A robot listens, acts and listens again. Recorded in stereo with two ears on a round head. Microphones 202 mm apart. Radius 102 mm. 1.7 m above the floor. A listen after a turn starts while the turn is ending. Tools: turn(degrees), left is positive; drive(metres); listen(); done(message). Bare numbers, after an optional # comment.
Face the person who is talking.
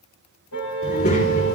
# The child speaking: about 45° left or 135° left.
turn(45)
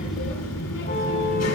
# So it is at 90° left.
turn(90)
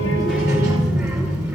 # The child speaking is now 15° right.
turn(-15)
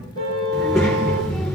done("Facing the child speaking, over 4 m away.")